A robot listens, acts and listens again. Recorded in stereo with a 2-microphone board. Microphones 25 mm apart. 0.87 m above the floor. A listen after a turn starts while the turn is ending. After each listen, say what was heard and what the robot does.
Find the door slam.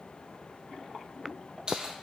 Keep listening.
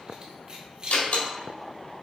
The door slam: about 70° left or 110° left. Turn 70° left.
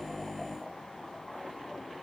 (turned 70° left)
Keep listening.
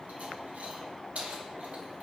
I heard a door slam, but can't make it out now. It was about straight ahead or 40° left.